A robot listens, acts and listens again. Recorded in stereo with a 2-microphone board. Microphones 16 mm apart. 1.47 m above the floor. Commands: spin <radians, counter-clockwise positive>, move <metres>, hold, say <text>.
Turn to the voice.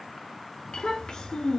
spin 0.96
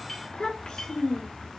spin 1.22
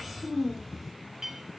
say Found it: a child speaking, straight ahead.